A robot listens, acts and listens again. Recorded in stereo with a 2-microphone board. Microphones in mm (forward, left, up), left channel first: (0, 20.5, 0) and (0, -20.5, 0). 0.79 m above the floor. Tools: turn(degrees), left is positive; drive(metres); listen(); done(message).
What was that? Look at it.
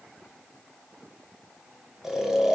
turn(degrees=-30)
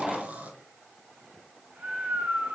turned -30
turn(degrees=-140)
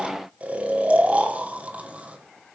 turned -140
turn(degrees=-40)
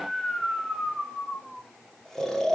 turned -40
turn(degrees=10)
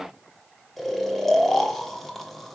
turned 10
done("Facing the snoring.")